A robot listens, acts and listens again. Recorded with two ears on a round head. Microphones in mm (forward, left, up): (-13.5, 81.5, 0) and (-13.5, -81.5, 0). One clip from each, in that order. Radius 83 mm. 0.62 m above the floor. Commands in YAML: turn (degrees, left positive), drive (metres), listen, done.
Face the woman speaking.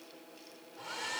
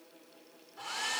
listen: true
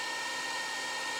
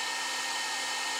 listen: true
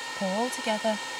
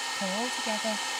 turn: 25
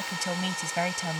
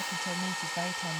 turn: 120
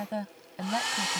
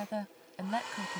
done: "Facing the woman speaking."